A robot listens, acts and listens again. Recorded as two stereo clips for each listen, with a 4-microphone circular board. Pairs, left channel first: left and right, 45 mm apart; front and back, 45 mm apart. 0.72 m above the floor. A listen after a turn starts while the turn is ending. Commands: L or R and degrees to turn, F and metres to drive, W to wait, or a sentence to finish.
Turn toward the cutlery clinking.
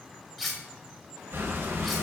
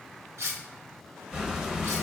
L175
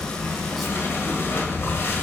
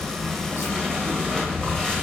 W
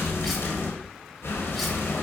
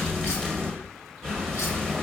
W
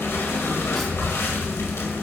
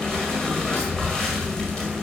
Facing where the cutlery clinking came from. I can't hear it now.